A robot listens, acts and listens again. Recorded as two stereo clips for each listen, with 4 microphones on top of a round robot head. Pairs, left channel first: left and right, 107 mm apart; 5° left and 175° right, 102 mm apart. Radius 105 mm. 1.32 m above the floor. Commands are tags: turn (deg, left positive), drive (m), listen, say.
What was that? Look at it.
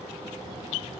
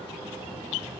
<listen/>
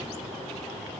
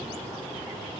<listen/>
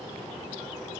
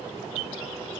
<say>I can't make out anything to turn to.</say>